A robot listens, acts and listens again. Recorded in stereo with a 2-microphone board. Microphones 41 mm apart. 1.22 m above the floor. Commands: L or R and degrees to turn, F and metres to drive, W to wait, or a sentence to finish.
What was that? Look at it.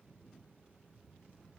W
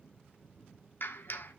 L60
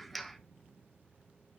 Found it: a clap, straight ahead, 1 to 2 m away.